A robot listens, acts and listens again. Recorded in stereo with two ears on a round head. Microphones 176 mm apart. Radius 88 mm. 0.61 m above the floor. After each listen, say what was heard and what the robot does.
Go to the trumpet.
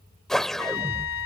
Turn 90° left.
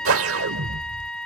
Drive 1.0 m forward.
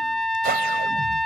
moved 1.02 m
Drive 1.0 m forward.
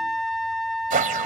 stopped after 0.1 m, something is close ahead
I am next to the trumpet.